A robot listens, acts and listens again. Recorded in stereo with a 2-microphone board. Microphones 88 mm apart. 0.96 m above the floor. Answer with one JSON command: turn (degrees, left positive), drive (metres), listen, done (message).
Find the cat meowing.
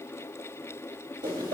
{"listen": true}
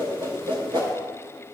{"listen": true}
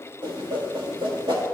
{"done": "I can't make out a cat meowing to turn to."}